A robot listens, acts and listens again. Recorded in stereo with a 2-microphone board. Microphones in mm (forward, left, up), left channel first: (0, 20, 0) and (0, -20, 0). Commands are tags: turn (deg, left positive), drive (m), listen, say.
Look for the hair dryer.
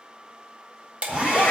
<turn deg="-35"/>
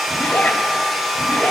<say>Found it: a hair dryer, straight ahead.</say>